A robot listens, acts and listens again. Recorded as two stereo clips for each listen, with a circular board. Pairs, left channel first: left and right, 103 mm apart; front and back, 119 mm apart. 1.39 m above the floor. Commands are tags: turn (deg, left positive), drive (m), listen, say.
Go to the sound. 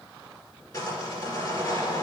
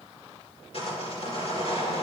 <turn deg="35"/>
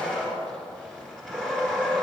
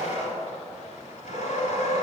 <drive m="1.0"/>
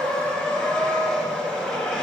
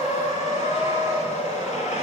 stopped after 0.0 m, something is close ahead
<turn deg="10"/>
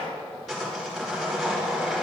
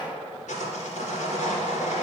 <say>Something is in my way. I am facing the sawing but have not reached it.</say>